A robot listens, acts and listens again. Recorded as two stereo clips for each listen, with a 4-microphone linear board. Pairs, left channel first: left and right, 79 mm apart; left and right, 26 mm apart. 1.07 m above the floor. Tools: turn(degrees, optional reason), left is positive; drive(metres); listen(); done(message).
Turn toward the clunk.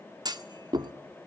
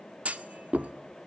turn(degrees=-60, reason="The clunk: about 60° right or 120° right.")
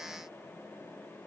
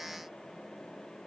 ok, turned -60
listen()
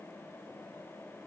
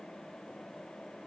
done("I heard a clunk, but can't make it out now. It was about straight ahead or 60° right.")